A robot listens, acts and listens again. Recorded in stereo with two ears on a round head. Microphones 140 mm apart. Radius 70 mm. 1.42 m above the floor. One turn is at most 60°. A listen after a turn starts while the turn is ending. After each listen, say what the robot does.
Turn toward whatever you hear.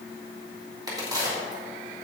Turn 25° right.
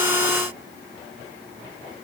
Keep listening.
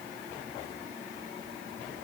I heard a crack, but can't make it out now. It was about straight ahead or 130° right.